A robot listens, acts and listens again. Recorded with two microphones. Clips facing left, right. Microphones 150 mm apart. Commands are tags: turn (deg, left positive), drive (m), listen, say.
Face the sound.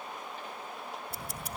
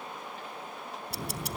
<turn deg="-75"/>
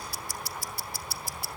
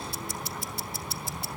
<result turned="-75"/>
<turn deg="-20"/>
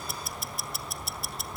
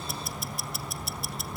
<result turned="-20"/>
<say>Found it: ticking, straight ahead, 1 to 2 m away.</say>